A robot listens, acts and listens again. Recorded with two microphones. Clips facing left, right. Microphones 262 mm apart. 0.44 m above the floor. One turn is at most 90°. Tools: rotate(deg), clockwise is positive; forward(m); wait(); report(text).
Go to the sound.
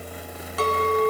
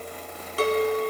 rotate(35)
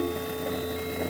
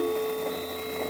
wait()
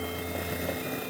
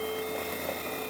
wait()
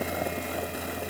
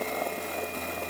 report("I heard a clink, but can't make it out now. It was about straight ahead or 110° right. I did not reach it.")